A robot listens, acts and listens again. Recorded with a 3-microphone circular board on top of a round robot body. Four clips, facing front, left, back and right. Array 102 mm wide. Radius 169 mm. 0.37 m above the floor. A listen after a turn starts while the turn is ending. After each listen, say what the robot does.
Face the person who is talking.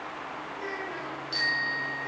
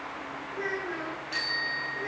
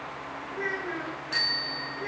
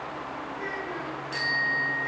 Turn 135° left.
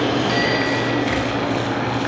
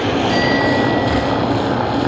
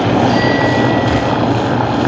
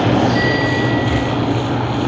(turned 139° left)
Keep listening.
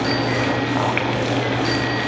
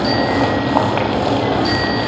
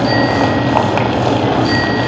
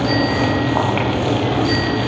Keep listening.
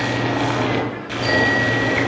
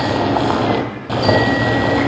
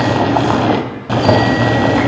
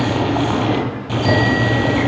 I heard a child speaking from this way, but can't make it out now.